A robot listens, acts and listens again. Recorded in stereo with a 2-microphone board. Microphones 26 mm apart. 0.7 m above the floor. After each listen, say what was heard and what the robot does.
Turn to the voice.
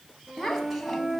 Turn 30° left.
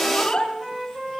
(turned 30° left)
So it is at 155° left. Turn 155° left.
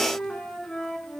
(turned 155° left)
Keep listening.
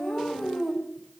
Facing the child speaking.